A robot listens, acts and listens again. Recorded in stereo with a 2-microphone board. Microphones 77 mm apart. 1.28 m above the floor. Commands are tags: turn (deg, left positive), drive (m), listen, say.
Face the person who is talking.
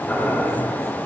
<listen/>
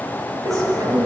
<turn deg="-55"/>
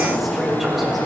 <say>Facing the woman speaking, 2 to 4 m away.</say>